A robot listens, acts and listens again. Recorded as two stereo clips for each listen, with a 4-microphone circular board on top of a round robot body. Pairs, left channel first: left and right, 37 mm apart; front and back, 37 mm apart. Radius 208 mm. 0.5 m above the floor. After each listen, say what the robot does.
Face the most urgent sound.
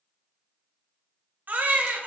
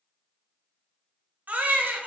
Turn 135° right.
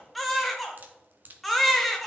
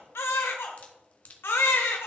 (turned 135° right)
Facing the baby crying, under 1 m away.